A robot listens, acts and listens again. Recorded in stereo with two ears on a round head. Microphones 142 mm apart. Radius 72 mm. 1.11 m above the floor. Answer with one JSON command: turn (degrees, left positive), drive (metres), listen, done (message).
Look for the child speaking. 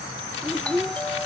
{"turn": 30}
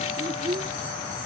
{"turn": -30}
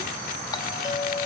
{"listen": true}
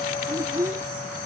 {"turn": -20}
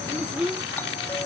{"done": "Facing the child speaking."}